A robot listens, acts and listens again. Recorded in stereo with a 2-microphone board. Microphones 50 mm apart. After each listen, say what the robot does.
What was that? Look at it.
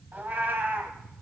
Turn 40° right.
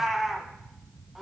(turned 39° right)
Facing the cat meowing, 2 to 4 m away.